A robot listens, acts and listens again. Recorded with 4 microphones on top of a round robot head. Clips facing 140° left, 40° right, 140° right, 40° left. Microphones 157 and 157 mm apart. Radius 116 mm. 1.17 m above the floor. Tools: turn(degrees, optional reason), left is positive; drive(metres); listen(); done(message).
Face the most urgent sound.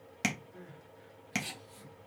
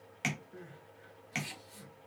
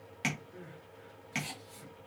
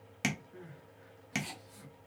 turn(degrees=-80, reason="The crying: 80° right.")
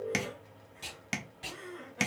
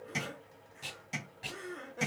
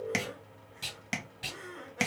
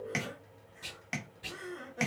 done("Facing the crying, 1 to 2 m away.")